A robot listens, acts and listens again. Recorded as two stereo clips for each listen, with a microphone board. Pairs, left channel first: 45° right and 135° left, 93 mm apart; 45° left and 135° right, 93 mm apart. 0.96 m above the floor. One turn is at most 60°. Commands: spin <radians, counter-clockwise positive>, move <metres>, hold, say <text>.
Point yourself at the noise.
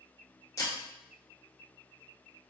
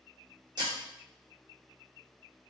spin -1.05
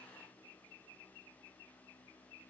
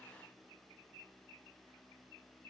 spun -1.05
spin -0.61
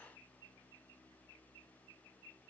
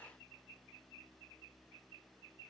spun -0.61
say I heard breaking glass from this way, but can't make it out now.